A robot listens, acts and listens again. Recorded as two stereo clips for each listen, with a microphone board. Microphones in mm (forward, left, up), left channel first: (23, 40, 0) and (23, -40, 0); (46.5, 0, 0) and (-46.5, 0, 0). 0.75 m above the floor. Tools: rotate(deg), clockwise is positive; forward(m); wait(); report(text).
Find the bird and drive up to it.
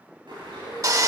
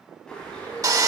rotate(80)
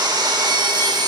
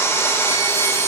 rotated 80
wait()
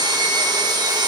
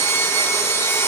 wait()
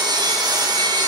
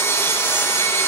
report("Facing where the bird came from. I can't hear it now. I did not reach it.")